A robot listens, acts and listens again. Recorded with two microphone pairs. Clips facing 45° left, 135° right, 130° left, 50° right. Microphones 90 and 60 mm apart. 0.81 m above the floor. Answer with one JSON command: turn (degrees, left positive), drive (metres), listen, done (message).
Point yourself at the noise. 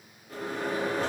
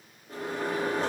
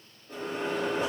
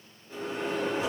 {"turn": 160}
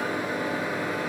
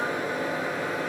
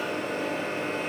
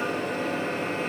{"turn": -35}
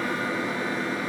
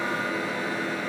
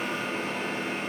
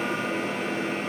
{"done": "Found it: a microwave, straight ahead."}